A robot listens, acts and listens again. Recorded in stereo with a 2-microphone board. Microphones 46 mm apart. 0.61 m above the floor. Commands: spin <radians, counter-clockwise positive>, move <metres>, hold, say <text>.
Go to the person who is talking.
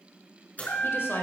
spin 0.96
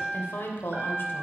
spin 1.05
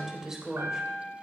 spin -0.17
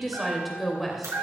move 1.0
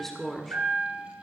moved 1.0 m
spin 0.17
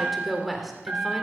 move 1.0
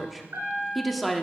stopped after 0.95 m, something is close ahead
say Arrived at the woman speaking, straight ahead.